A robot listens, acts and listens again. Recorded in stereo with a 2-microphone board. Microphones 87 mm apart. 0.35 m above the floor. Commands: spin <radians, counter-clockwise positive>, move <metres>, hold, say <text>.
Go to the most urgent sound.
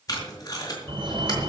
spin -1.13
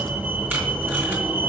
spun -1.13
spin -0.35
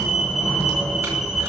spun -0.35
move 1.0
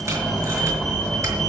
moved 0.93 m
move 1.0
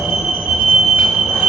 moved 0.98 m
move 1.0
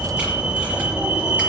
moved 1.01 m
spin -0.26
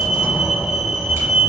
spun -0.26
move 1.0
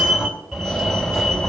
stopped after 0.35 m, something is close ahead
say I am next to the fire alarm.